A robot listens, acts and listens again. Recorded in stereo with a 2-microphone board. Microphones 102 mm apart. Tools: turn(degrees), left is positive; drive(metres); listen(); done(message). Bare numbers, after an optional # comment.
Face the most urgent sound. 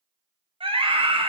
# The scream: about 60° right or 120° right.
turn(-60)
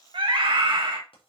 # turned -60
# So it is at 60° right.
turn(-60)
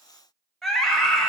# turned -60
done("Found it: a scream, straight ahead, 2 to 4 m away.")